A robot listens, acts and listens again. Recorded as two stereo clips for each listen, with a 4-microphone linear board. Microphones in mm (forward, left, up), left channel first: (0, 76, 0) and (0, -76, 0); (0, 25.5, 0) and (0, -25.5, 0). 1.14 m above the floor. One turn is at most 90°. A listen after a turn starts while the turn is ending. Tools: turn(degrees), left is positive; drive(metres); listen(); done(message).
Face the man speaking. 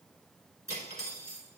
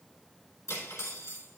listen()
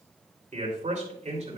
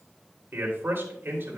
turn(degrees=-50)
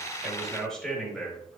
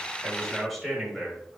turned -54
done("Found it: a man speaking, straight ahead, 2 to 4 m away.")